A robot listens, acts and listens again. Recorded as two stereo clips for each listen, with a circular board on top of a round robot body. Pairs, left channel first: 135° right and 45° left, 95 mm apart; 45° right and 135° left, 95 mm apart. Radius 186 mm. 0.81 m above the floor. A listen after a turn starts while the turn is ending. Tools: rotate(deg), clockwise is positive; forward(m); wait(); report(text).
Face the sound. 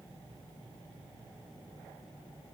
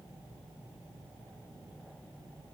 wait()
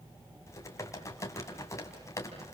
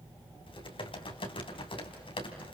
rotate(75)
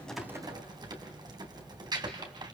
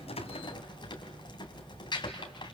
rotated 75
report("Found it: typing on a keyboard, straight ahead, 2 to 4 m away.")